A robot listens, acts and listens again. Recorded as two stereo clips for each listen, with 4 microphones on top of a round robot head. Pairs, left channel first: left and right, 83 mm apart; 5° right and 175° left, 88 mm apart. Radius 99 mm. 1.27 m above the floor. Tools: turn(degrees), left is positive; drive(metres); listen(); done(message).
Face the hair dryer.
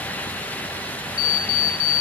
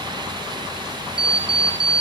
listen()
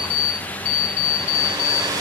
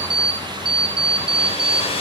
turn(degrees=-30)
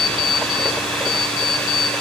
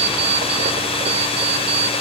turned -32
done("Found it: a hair dryer, straight ahead, 2 to 4 m away.")